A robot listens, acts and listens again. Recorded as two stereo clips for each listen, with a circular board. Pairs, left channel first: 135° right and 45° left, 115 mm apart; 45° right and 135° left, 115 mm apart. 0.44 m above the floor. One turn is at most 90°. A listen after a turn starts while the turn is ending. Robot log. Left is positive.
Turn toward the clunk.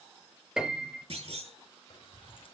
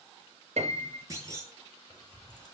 note: The clunk: 75° left.
cmd yaw +75
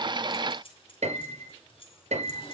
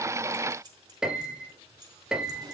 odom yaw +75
end: Facing where the clunk came from. I can't hear it now.